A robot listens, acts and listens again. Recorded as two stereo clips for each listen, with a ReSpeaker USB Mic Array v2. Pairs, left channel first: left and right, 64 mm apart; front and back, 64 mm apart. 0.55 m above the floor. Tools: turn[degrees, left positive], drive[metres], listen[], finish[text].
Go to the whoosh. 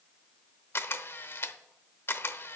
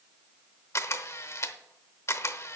Action: listen[]
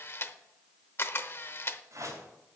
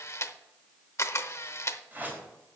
Thought: The whoosh: 120° right.
Action: turn[-120]
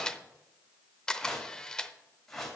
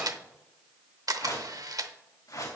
Thought: The whoosh is now 10° left.
Action: turn[10]
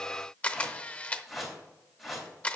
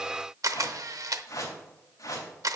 Action: drive[1.0]
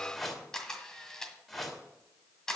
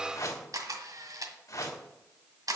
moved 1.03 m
Action: drive[1.0]
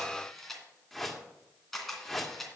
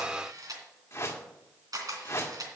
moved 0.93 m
Action: drive[1.0]
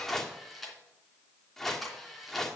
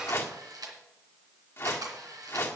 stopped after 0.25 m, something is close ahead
Thought: The whoosh is now 10° left.
Action: turn[10]
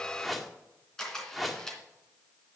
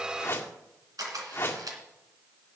Action: finish[I am next to the whoosh.]